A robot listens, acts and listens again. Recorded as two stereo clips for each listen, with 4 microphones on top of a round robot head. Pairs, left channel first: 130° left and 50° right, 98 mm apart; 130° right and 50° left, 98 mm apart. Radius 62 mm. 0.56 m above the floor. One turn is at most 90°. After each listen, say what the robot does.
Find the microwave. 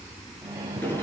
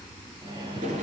Turn 10° left.
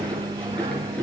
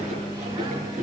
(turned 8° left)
Found it: a microwave, straight ahead, over 4 m away.